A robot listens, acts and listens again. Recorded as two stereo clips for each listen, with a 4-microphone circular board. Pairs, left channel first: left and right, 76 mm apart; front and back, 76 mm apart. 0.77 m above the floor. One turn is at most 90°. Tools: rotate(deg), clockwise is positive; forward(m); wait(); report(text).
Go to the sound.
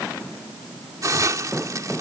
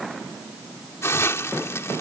rotate(50)
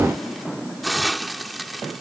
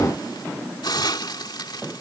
forward(1.0)
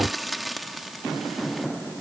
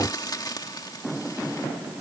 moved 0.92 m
forward(1.0)
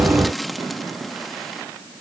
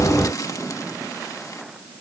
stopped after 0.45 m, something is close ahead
report("I am next to the hiss.")